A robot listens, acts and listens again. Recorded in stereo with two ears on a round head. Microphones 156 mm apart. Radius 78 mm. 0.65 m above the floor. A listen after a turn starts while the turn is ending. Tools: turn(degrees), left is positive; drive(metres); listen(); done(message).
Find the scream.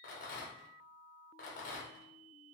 listen()
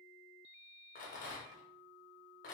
listen()
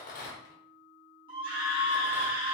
turn(degrees=-30)
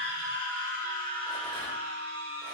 turn(degrees=-115)
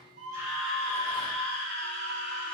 done("Found it: a scream, straight ahead.")